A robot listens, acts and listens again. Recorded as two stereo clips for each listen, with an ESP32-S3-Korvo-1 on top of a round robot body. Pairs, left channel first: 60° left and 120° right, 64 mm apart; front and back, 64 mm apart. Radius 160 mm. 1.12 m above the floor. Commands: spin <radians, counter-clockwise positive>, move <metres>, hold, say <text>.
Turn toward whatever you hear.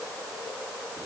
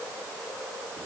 hold
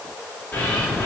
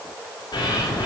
say Found it: a bird, straight ahead.